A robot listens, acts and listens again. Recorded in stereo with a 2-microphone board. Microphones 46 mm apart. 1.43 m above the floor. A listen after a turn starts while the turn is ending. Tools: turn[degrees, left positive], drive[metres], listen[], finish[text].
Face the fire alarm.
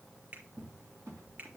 Action: listen[]
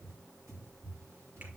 Action: listen[]
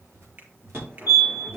Thought: The fire alarm: about 55° right or 125° right.
Action: turn[-55]
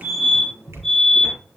Action: finish[Facing the fire alarm, over 4 m away.]